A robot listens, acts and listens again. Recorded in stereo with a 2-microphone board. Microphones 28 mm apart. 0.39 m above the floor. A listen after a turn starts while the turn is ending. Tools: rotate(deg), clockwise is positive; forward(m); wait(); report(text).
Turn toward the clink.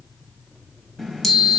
wait()
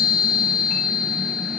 wait()
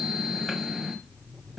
report("I can't make out a clink to turn to.")